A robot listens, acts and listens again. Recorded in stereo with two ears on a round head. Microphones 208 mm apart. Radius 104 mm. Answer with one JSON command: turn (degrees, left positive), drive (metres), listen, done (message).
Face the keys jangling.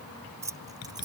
{"turn": -20}
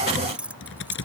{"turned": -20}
{"turn": -30}
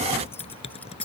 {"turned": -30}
{"done": "Found it: keys jangling, straight ahead."}